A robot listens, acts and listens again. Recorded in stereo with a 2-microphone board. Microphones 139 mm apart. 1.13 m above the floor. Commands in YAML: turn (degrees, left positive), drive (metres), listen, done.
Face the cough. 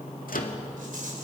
listen: true
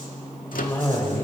turn: 15
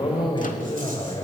turn: 145
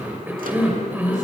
turn: -15
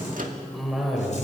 done: "Found it: a cough, straight ahead, over 4 m away."